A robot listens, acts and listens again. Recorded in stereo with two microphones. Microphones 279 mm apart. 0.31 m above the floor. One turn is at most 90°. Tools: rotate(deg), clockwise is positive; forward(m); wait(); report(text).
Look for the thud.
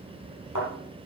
rotate(-90)
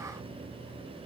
report("I heard a thud from this way, but can't make it out now.")